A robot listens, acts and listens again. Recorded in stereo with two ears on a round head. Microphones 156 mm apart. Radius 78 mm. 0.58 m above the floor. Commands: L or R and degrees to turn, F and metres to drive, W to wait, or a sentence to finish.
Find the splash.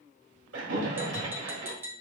R75
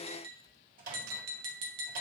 W
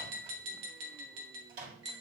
I heard a splash, but can't make it out now. It was about straight ahead or 30° right.